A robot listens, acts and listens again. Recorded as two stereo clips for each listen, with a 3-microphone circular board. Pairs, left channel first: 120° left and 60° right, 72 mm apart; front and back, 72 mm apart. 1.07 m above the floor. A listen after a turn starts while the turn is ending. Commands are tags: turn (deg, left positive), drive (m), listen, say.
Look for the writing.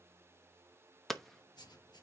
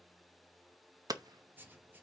<turn deg="120"/>
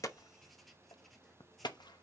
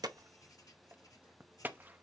<listen/>
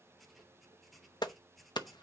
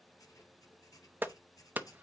<turn deg="30"/>
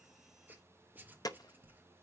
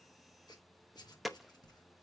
<say>Found it: writing, straight ahead.</say>